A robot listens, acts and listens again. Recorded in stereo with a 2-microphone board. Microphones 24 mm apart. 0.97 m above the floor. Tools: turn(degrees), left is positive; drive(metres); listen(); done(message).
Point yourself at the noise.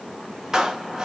turn(degrees=-25)
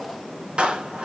turn(degrees=-130)
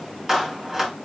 turn(degrees=-15)
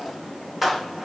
done("Found it: a clap, straight ahead, 2 to 4 m away.")